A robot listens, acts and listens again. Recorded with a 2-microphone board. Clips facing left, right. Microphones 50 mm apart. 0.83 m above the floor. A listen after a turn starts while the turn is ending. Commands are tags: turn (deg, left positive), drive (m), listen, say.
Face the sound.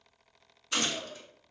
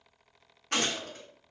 <turn deg="-55"/>
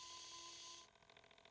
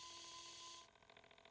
<listen/>
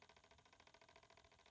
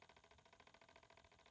<say>I heard a gunshot, but can't make it out now. It was about straight ahead or 70° right.</say>